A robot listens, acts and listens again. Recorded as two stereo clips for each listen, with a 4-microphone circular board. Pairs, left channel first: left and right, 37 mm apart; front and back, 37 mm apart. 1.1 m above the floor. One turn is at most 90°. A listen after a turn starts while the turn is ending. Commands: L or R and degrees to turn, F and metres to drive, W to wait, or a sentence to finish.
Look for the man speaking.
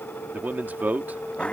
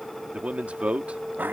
R90
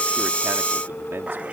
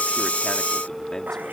R40
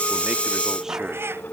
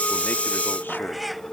W
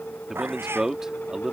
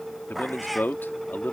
R15
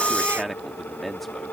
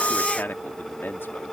Facing the man speaking.